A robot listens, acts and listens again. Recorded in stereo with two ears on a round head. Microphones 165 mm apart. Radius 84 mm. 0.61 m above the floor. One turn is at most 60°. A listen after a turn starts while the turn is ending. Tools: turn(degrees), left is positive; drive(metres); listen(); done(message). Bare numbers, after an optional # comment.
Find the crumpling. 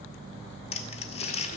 # The crumpling: about 30° left or 150° left.
turn(30)
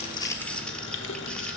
listen()
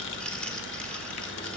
listen()
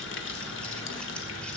done("I heard crumpling, but can't make it out now. It was about straight ahead or 120° left.")